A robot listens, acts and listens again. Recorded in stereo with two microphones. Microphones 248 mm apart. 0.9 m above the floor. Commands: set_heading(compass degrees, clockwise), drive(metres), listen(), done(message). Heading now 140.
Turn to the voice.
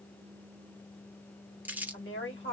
set_heading(90)
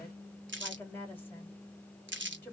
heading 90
set_heading(80)
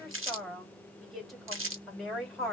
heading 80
done("Facing the woman speaking, 2 to 4 m away.")